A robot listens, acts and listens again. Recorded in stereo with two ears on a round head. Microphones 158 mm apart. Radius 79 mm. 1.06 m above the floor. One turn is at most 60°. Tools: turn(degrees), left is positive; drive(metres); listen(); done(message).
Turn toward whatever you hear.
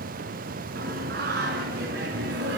turn(degrees=-60)
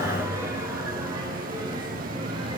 turn(degrees=-25)
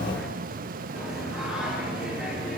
done("Facing the singing, over 4 m away.")